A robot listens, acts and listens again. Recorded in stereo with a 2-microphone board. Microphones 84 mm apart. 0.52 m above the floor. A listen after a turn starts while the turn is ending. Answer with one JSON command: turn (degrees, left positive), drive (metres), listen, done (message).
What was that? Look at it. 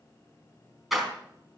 {"turn": 30}
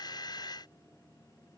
{"listen": true}
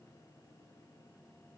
{"done": "I heard a door slam, but can't make it out now. It was about 30° right or 150° left."}